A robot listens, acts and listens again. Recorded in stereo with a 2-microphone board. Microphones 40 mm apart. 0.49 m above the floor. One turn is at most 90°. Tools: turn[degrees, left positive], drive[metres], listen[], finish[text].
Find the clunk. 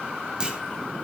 Thought: The clunk: about 20° right or 160° right.
Action: turn[-20]
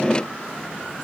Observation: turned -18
Action: listen[]
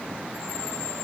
Action: finish[I heard a clunk, but can't make it out now. It was about straight ahead or 145° right.]